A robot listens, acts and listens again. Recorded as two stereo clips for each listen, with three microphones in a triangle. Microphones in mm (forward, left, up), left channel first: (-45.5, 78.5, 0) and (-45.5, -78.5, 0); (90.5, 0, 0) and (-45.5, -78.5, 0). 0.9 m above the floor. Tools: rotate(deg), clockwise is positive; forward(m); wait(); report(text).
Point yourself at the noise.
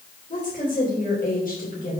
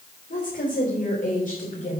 rotate(-65)
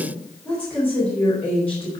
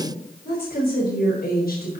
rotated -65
rotate(-10)
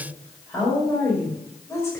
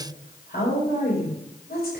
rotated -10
rotate(-10)
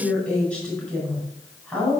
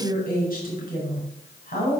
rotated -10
report("Found it: a woman speaking, straight ahead, over 4 m away.")